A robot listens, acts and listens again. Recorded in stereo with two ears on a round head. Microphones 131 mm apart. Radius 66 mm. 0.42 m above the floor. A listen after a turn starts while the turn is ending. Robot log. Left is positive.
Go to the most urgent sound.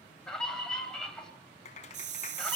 cmd yaw +30
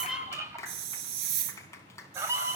note: So it is at 25° right.
cmd yaw -25
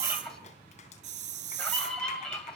note: The scream is now 10° left.
cmd yaw +10
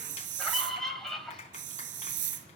cmd fwd 1.0
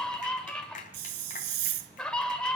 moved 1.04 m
note: The scream is now 10° left.
cmd yaw +10
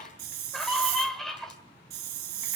cmd fwd 1.0
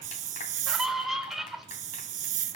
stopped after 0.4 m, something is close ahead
end: Arrived at the scream, straight ahead.